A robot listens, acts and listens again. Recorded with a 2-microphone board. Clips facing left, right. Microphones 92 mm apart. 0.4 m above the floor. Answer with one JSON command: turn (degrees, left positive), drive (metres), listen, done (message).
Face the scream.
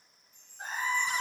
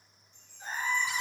{"turn": 90}
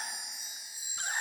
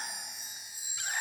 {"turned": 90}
{"listen": true}
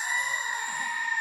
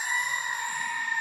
{"done": "Facing the scream."}